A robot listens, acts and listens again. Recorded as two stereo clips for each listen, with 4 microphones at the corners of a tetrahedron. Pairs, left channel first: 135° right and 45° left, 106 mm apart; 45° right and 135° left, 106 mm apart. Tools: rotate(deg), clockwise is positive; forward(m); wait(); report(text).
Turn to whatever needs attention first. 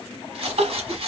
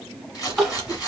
rotate(-45)
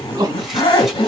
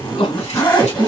rotate(15)
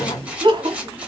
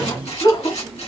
report("Facing the crying.")